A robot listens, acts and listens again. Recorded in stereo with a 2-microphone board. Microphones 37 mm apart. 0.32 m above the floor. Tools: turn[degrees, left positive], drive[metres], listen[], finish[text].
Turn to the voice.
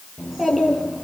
Action: turn[-30]
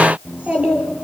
Thought: So it is at 140° right.
Action: turn[-140]
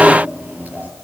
Thought: The child speaking is now 45° right.
Action: turn[-45]
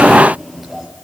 Action: finish[Facing the child speaking.]